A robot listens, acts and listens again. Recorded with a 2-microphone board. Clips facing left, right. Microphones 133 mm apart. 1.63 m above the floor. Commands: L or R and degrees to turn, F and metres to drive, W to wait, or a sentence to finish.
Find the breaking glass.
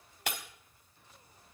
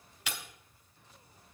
L55
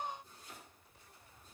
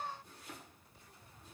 W
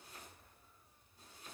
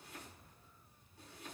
I heard breaking glass, but can't make it out now. It was about straight ahead or 70° left.